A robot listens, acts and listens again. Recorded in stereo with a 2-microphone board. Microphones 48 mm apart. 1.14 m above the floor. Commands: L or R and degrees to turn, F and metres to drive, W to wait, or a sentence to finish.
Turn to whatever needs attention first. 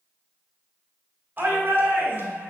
R45
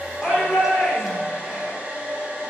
Facing the shout, 2 to 4 m away.